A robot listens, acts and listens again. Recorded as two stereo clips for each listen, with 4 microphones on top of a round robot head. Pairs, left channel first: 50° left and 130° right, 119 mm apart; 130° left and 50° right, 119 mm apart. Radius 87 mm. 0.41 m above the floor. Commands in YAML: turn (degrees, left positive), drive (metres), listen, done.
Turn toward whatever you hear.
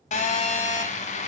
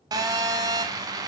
turn: 15
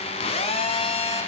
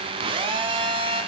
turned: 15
done: "Facing the phone buzzing, under 1 m away."